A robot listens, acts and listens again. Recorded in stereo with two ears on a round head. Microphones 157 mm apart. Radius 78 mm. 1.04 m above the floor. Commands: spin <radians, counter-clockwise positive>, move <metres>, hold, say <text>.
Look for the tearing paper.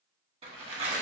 spin -0.61
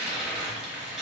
say Found it: tearing paper, straight ahead, under 1 m away.